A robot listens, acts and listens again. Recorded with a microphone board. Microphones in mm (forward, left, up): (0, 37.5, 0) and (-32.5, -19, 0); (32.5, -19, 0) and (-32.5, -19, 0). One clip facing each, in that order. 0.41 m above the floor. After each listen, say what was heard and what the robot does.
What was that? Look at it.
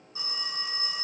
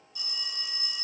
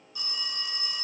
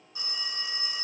The phone ringing: 115° left. Turn 115° left.
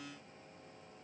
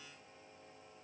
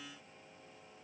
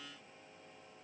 Keep listening.
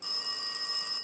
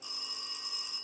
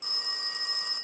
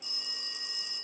The phone ringing is now 35° left. Turn 35° left.
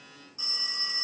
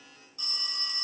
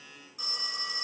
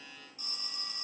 Found it: a phone ringing, straight ahead, 1 to 2 m away.